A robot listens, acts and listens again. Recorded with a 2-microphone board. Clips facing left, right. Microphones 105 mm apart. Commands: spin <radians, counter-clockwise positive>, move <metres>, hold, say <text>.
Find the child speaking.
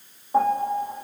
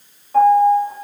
hold
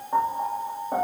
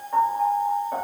hold
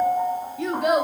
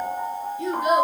spin 1.13
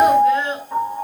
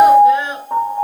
spin -0.26
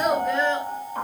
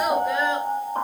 say Found it: a child speaking, straight ahead.